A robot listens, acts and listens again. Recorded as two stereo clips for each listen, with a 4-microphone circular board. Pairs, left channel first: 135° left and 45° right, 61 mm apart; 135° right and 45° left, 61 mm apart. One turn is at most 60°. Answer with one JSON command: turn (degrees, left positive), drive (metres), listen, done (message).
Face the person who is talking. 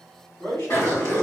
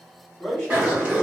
{"turn": 60}
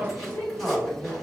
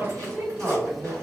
{"turn": 60}
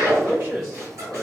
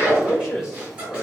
{"turn": -45}
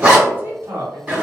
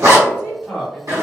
{"turn": -30}
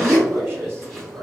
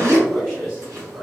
{"done": "Facing the man speaking, 1 to 2 m away."}